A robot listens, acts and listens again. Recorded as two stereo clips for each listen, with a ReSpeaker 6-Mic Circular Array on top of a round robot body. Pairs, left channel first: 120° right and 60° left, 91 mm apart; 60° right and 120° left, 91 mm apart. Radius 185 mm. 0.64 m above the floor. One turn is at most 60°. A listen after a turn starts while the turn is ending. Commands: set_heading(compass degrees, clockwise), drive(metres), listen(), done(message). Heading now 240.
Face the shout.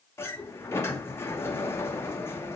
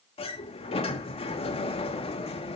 listen()
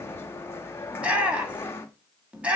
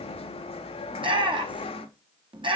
set_heading(180)
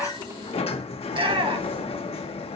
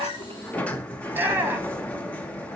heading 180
set_heading(125)
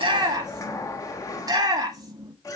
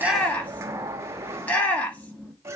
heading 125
set_heading(110)
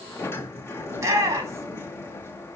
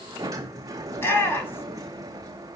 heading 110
done("Facing the shout, 2 to 4 m away.")